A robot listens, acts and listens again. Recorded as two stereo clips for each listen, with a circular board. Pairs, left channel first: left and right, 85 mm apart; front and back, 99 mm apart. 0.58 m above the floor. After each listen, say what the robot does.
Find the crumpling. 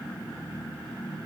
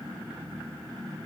Keep listening.
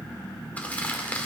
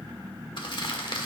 Turn 20° left.
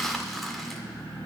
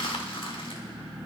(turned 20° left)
Found it: crumpling, straight ahead, 1 to 2 m away.